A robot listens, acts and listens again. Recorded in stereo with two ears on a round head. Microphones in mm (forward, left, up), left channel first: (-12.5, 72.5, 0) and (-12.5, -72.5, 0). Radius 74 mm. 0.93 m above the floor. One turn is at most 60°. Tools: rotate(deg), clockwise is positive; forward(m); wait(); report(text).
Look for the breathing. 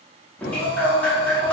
rotate(-60)
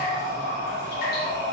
rotate(-50)
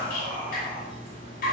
wait()
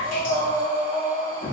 rotate(10)
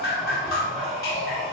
report("Found it: breathing, straight ahead, 1 to 2 m away.")